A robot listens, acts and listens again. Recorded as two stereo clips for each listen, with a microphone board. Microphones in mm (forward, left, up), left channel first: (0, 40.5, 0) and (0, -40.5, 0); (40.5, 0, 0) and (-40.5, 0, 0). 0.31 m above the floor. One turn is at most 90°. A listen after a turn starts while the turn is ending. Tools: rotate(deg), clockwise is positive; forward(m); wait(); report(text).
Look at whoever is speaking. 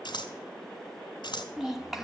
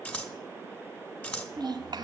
rotate(90)
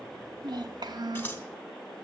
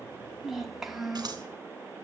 rotate(90)
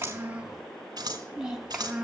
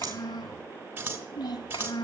rotate(10)
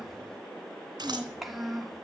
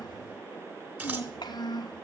report("Facing the child speaking, 1 to 2 m away.")